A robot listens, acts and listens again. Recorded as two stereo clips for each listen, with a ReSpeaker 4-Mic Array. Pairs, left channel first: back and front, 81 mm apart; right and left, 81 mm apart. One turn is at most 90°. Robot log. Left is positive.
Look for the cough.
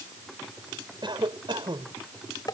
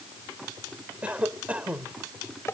note: The cough: 15° left.
cmd yaw +15
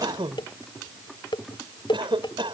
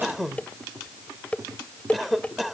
end: Facing the cough.